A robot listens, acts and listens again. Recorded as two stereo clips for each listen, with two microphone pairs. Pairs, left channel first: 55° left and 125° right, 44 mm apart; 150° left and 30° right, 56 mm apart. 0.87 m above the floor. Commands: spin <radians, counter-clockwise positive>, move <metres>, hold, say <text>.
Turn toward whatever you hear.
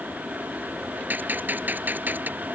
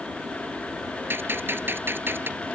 spin -1.31
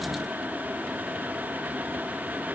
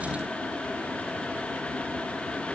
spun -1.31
say Facing where the gunshot came from. I can't hear it now.